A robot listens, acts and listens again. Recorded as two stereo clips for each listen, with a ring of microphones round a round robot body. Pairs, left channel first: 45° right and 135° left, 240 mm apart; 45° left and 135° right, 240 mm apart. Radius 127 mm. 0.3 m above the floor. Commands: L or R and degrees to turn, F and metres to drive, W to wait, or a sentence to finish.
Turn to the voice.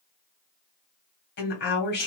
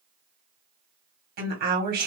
R90
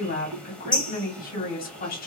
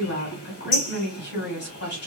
Facing the woman speaking, 1 to 2 m away.